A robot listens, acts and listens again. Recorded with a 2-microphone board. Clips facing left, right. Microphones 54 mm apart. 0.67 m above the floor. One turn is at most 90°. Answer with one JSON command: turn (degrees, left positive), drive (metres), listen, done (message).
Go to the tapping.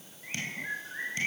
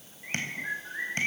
{"turn": -45}
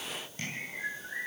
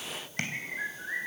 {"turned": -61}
{"turn": -70}
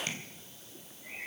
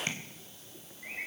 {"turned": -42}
{"turn": -30}
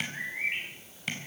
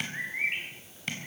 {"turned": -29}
{"drive": 1.0}
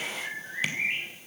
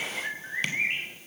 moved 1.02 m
{"listen": true}
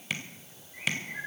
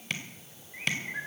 {"drive": 1.0}
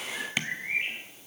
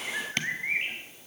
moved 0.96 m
{"drive": 1.0}
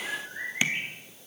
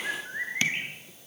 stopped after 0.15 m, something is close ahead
{"listen": true}
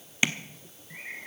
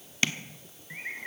{"turn": 15}
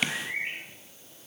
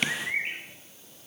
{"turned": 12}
{"done": "Arrived at the tapping, straight ahead."}